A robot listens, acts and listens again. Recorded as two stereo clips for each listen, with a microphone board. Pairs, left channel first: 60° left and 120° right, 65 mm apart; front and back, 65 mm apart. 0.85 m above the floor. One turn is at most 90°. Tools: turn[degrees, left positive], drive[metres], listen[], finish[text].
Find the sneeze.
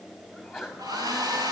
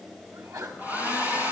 Thought: The sneeze: 155° left.
Action: turn[90]
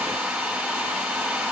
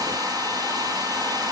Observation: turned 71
Thought: Nothing new. It was at 80° left.
Action: turn[80]
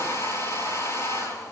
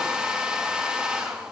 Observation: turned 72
Thought: Nothing new. It was at 10° left.
Action: turn[10]
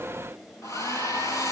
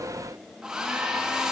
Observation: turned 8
Action: finish[I heard a sneeze from this way, but can't make it out now.]